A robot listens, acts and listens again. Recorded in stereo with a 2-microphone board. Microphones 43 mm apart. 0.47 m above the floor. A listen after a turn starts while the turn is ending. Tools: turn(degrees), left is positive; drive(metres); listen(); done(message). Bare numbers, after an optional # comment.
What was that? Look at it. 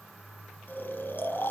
# The snoring: about 50° left or 130° left.
turn(50)
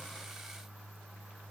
listen()
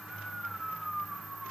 done("Facing the snoring.")